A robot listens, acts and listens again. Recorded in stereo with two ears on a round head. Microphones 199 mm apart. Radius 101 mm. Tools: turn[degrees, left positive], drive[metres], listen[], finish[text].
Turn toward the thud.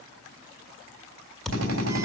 Action: turn[30]
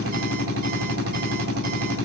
Action: listen[]
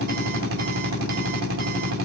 Action: finish[I heard a thud, but can't make it out now. It was about 30° right or 150° left.]